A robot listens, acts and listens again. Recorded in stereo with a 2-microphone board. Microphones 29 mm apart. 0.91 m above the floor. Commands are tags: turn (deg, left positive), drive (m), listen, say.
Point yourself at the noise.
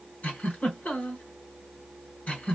<turn deg="70"/>
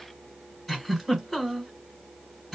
<say>Facing the giggle, 1 to 2 m away.</say>